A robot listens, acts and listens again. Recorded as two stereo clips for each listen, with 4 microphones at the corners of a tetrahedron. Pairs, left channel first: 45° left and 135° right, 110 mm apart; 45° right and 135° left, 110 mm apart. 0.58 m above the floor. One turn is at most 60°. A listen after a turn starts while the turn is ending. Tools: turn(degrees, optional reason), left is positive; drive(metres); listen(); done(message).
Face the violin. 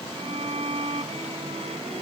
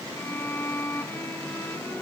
turn(degrees=-60, reason="The violin: 115° right.")
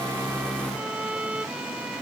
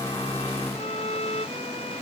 turn(degrees=-55, reason="The violin is now 55° right.")
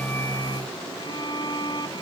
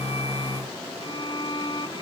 done("Facing the violin.")